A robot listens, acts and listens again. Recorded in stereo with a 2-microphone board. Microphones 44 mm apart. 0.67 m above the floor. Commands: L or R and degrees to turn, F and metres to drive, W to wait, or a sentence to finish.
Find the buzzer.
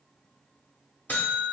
L40
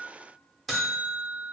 Facing the buzzer, under 1 m away.